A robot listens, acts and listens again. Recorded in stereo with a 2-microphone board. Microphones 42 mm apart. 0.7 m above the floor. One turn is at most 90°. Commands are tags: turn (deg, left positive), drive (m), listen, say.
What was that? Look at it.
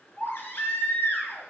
<turn deg="55"/>
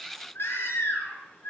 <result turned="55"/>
<turn deg="70"/>
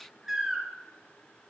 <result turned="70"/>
<turn deg="-10"/>
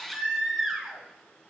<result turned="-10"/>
<say>Facing the baby crying, over 4 m away.</say>